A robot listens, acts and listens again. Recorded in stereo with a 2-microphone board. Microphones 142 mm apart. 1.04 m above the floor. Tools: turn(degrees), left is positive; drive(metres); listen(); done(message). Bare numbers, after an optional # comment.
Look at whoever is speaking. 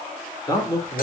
# The man speaking: about 25° left or 155° left.
turn(25)
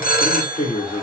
# So it is at 130° left.
turn(130)
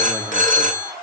listen()
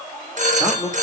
done("Facing the man speaking.")